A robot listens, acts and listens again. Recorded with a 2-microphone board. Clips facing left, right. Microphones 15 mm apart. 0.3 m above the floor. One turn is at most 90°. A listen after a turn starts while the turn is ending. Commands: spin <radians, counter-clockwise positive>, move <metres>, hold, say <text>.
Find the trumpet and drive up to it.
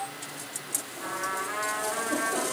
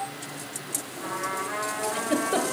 spin 0.52
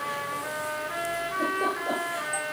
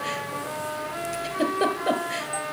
spin 1.57
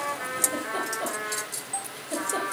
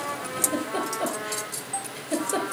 spin 1.31
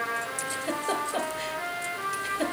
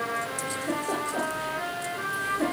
move 1.0
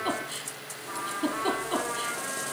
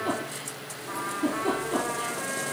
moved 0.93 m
move 1.0
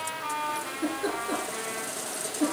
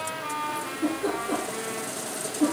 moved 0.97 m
move 1.0
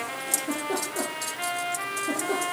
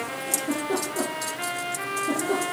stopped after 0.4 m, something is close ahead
say Arrived at the trumpet, straight ahead.